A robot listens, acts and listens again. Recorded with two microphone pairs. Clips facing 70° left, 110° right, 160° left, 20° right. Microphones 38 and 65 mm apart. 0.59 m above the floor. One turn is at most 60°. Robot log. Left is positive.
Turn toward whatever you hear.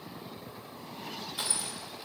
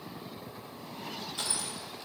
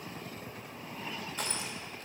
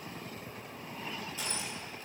note: The crushing: 150° left.
cmd yaw +60
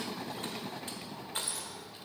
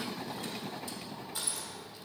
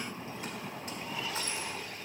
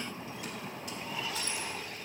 note: The crushing is now 115° left.
cmd yaw +60
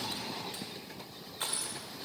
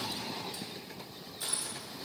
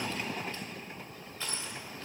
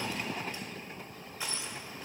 note: The crushing is now 55° left.
cmd yaw +55
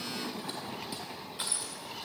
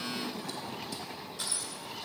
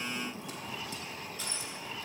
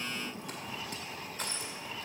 note: The crushing is now 10° left.
cmd yaw +10
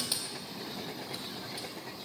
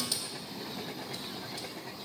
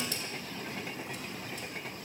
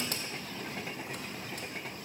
cmd idle
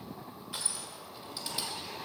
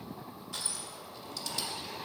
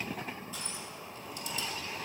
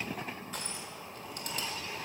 end: Facing the crushing, 1 to 2 m away.